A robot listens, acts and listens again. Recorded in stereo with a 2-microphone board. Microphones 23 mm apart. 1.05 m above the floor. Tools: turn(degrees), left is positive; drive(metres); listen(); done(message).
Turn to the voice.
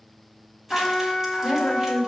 turn(degrees=30)
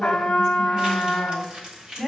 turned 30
turn(degrees=-30)
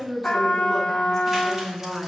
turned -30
done("Found it: a woman speaking, straight ahead, over 4 m away.")